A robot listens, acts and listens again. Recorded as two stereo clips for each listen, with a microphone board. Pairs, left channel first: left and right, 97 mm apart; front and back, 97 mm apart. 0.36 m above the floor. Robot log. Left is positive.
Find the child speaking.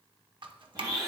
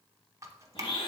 cmd idle
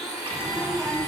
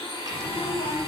end: Facing the child speaking.